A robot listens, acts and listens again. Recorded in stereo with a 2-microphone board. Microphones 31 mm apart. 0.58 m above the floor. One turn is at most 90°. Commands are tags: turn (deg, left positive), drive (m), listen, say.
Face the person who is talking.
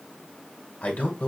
<turn deg="65"/>
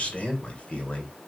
<turn deg="45"/>
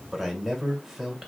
<turn deg="-10"/>
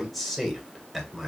<say>Facing the man speaking.</say>